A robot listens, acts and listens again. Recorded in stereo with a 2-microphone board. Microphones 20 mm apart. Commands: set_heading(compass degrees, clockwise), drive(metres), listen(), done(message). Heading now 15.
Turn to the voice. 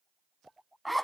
listen()
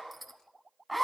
listen()
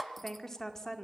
set_heading(350)
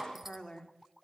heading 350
set_heading(220)
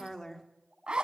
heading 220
set_heading(195)
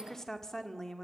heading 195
set_heading(175)
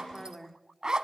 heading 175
done("Found it: a woman speaking, straight ahead, 1 to 2 m away.")